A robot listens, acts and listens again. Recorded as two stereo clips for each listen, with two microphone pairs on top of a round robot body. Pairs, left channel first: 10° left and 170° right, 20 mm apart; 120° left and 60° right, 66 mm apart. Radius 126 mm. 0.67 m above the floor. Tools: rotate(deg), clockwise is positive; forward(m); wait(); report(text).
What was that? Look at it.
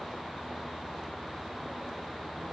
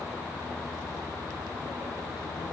wait()
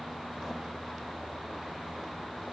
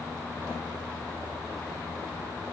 wait()
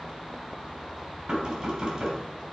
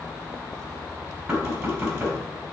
rotate(135)
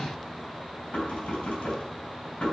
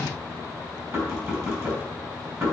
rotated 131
report("Found it: knocking, straight ahead, over 4 m away.")